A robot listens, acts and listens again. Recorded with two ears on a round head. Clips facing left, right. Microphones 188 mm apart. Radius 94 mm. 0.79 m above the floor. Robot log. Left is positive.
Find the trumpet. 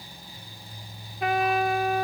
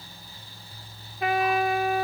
cmd yaw +30
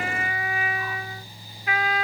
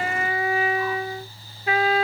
note: So it is at 30° right.
cmd yaw -30
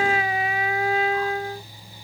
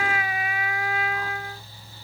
note: The trumpet is now 25° left.
cmd yaw +25
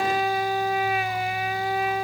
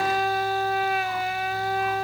end: Facing the trumpet.